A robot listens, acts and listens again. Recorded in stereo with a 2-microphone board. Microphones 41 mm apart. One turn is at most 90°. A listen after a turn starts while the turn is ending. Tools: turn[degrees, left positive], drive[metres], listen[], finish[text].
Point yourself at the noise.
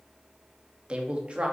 Thought: The man speaking: about 30° right or 150° right.
Action: turn[-30]
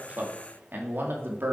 Thought: So it is at 115° right.
Action: turn[-90]
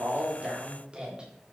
Thought: The man speaking is now 25° right.
Action: turn[-25]
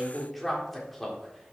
Action: finish[Found it: a man speaking, straight ahead.]